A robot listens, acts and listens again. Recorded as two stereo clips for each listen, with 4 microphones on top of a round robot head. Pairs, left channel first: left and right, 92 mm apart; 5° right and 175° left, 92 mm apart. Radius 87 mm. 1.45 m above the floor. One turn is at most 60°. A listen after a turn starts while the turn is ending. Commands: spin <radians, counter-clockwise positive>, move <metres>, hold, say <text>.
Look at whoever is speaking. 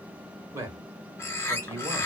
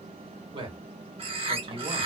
spin -1.05
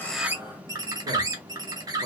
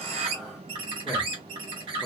spin -1.05
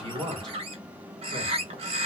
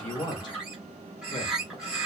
spin -0.79
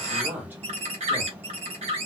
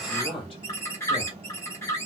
spin -0.35
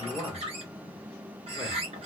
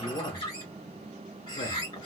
say Facing the man speaking.